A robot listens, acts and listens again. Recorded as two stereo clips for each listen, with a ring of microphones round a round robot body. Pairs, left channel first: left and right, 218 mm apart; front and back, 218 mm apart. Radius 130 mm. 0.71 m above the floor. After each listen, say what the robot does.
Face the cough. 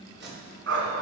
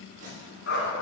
Keep listening.
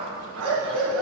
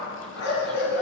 Keep listening.
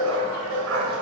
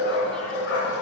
I can't make out a cough, only tape being pulled and a dog barking.